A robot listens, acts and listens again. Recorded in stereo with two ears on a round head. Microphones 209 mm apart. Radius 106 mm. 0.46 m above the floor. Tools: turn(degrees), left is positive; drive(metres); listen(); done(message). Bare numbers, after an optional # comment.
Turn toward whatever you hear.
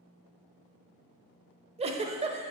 # The giggle: about 25° right or 155° right.
turn(-25)
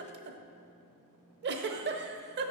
# So it is at 130° right.
turn(-130)
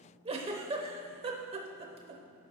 # The giggle is now 25° right.
turn(-25)
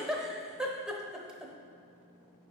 done("Facing the giggle, under 1 m away.")